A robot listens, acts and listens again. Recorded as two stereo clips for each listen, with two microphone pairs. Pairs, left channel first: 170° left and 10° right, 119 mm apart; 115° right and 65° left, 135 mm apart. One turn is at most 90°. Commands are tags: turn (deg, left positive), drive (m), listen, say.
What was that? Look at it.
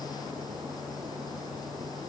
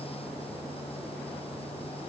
<listen/>
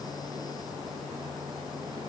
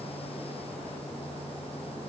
<listen/>
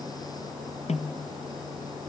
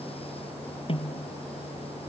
<turn deg="-90"/>
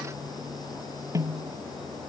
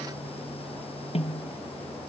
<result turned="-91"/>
<turn deg="-75"/>
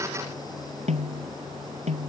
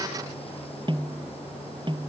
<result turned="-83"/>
<turn deg="10"/>
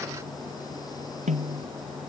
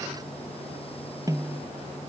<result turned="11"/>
<say>Found it: a snare drum, straight ahead.</say>